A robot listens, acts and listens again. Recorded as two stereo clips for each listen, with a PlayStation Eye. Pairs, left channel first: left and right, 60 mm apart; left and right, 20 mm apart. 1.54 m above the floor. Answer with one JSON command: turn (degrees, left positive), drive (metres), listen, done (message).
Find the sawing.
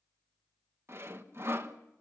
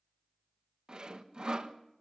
{"turn": -45}
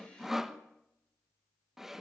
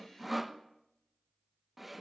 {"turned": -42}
{"done": "Found it: sawing, straight ahead, 1 to 2 m away."}